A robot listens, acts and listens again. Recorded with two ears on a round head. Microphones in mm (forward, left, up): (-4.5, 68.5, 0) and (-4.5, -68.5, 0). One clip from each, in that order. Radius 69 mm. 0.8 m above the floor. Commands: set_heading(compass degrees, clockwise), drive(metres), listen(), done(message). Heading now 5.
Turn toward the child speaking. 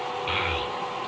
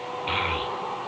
set_heading(335)
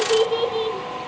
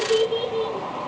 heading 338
set_heading(203)
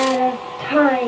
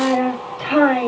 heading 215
done("Facing the child speaking, 2 to 4 m away.")